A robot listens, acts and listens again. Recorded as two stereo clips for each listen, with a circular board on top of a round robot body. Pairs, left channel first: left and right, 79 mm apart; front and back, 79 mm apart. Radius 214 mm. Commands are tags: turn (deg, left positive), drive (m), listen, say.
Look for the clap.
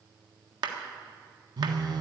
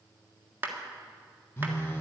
<turn deg="-115"/>
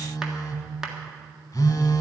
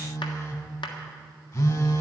<say>Facing the clap.</say>